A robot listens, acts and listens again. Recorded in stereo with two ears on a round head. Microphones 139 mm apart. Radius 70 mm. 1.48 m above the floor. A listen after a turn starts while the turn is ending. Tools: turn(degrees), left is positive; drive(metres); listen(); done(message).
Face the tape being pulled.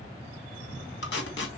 turn(degrees=90)
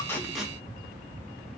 listen()
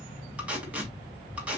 turn(degrees=-10)
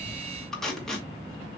done("Found it: tape being pulled, straight ahead.")